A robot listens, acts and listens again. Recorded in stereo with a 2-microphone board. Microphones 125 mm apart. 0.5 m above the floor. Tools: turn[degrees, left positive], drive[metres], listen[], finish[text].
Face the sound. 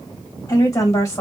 Thought: The woman speaking: about 25° left or 155° left.
Action: turn[25]
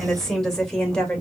Action: finish[Found it: a woman speaking, straight ahead, 1 to 2 m away.]